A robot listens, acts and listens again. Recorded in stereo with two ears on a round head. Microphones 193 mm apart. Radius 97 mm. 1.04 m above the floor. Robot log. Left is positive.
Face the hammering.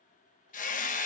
note: The hammering: about 35° left or 145° left.
cmd yaw +35
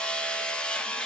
end: Facing the hammering, 1 to 2 m away.